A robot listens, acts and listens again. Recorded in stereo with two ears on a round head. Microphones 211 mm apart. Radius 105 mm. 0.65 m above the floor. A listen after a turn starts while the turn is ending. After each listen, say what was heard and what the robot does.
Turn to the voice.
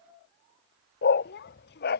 The child speaking: about 50° left or 130° left. Turn 50° left.
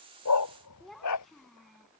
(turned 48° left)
Facing the child speaking.